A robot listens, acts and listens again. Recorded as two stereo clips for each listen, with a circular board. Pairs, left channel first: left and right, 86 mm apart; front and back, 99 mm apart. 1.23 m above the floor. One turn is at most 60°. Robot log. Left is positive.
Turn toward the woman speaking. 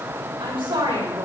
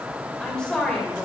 note: The woman speaking: 80° right.
cmd yaw -60
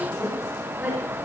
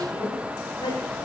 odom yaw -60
note: The woman speaking is now 20° right.
cmd yaw -20
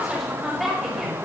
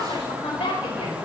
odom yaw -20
end: Found it: a woman speaking, straight ahead.